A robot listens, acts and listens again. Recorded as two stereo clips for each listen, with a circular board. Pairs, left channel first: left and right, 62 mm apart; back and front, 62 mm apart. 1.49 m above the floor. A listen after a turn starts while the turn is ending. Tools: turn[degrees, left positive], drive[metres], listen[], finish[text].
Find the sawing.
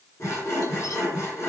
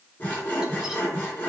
Thought: The sawing: 120° left.
Action: turn[120]
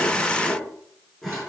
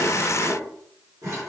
Action: finish[Found it: sawing, straight ahead, 2 to 4 m away.]